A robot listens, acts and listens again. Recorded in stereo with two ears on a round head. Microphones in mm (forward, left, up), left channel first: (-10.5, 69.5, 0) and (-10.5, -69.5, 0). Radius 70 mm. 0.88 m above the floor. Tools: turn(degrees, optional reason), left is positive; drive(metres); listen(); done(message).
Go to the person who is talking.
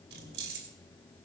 listen()
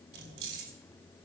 listen()
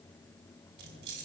done("I can't make out anyone speaking, only keys jangling.")